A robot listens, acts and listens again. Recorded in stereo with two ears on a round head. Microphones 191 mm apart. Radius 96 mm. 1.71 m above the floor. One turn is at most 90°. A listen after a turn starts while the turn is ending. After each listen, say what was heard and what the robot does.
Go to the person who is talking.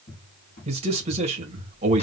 The man speaking: about 30° right or 150° right. Turn 30° right.
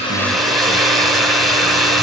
Keep listening.
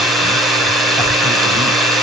Keep listening.
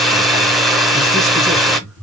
Drive 1.0 m forward.
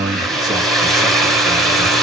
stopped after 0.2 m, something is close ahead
Blocked. The man speaking is further on, straight ahead.